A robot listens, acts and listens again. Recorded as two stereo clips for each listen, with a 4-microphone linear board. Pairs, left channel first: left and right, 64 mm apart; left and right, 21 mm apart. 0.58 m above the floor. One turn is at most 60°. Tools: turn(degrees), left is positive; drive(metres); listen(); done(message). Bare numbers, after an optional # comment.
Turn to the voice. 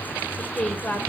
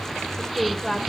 # The woman speaking: about 30° left or 150° left.
turn(30)
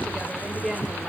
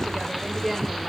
done("Facing the woman speaking.")